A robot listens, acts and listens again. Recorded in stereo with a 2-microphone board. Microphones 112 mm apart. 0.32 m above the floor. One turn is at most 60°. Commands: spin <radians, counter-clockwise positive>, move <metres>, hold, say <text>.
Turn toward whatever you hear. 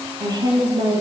spin -0.61
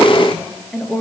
say Facing the woman speaking, over 4 m away.